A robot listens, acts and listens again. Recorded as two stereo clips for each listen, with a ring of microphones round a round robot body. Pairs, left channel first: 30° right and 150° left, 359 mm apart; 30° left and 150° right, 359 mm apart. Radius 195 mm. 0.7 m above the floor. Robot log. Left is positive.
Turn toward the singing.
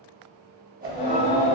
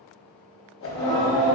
note: The singing: 60° right.
cmd yaw -60
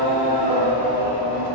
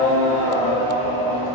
note: The singing is now 45° right.
cmd yaw -45
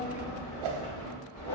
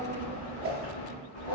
note: The singing is now 15° right.
cmd yaw -15
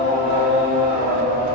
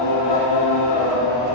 note: The singing is now 10° right.
cmd yaw -10
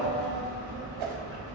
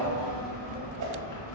end: Facing the singing.